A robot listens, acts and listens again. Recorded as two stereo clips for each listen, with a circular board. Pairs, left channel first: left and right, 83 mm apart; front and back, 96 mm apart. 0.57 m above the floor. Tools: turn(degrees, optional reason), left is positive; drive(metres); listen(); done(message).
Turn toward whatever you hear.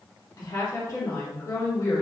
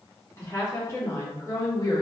turn(degrees=40, reason="The woman speaking: 40° left.")
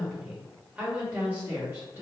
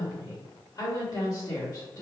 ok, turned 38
turn(degrees=-35, reason="The woman speaking is now 35° right.")
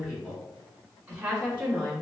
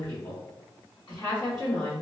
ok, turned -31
turn(degrees=-40, reason="The woman speaking is now 40° right.")
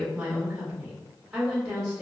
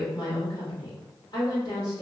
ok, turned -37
done("Found it: a woman speaking, straight ahead.")